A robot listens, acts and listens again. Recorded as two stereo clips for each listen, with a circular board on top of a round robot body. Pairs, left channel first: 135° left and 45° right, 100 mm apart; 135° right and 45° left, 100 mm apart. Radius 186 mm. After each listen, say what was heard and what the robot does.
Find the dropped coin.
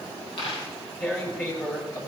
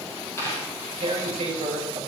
The dropped coin: 165° left. Turn 165° left.
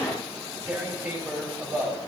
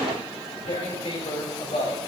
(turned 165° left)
I heard a dropped coin from this way, but can't make it out now.